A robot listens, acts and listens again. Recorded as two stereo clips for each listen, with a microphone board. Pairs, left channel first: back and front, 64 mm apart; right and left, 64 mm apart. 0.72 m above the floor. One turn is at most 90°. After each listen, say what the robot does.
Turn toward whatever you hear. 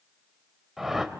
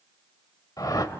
Turn 85° right.
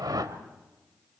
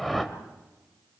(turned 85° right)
Facing the whoosh.